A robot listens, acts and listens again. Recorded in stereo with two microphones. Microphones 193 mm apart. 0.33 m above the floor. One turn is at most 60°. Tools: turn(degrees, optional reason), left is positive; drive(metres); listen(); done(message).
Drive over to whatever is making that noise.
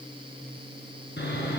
turn(degrees=60, reason="The sawing: about 65° left or 115° left.")
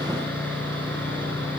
turn(degrees=10, reason="So it is at 10° left.")
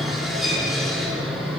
drive(metres=1.0)
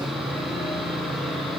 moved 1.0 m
drive(metres=1.0)
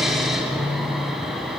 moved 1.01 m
drive(metres=1.0)
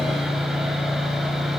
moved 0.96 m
drive(metres=1.0)
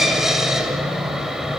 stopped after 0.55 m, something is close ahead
done("Arrived at the sawing, straight ahead.")